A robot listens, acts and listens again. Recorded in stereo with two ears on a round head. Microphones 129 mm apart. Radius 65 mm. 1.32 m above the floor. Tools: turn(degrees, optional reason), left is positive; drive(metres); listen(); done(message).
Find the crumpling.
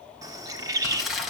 turn(degrees=30)
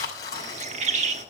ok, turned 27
turn(degrees=155, reason="So it is at 155° left.")
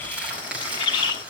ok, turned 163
turn(degrees=-10, reason="The crumpling is now 10° right.")
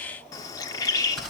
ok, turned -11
done("Found it: crumpling, straight ahead, over 4 m away.")